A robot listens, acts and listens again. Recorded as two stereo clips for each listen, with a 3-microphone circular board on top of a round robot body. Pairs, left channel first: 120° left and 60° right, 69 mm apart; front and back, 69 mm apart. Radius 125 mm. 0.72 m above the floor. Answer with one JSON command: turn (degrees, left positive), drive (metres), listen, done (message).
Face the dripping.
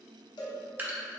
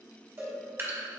{"turn": -125}
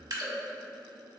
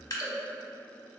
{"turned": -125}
{"turn": -35}
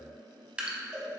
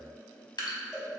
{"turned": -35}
{"turn": 15}
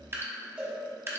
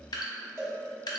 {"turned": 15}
{"done": "Found it: dripping, straight ahead."}